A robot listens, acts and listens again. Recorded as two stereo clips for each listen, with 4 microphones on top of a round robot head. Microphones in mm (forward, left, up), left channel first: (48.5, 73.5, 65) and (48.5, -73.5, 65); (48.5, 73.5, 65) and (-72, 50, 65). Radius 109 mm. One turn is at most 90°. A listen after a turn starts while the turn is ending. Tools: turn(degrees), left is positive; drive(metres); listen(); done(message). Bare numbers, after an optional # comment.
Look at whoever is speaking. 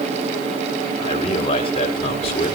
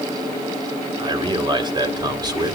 # The man speaking: 135° left.
turn(90)
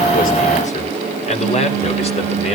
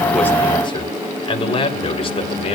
# The man speaking is now 45° left.
turn(45)
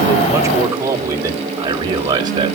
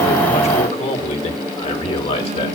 # The man speaking is now 30° right.
turn(-30)
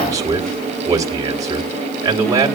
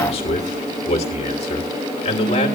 # The man speaking is now 25° right.
turn(-25)
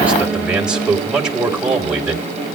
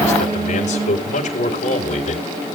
done("Found it: a man speaking, straight ahead, 2 to 4 m away.")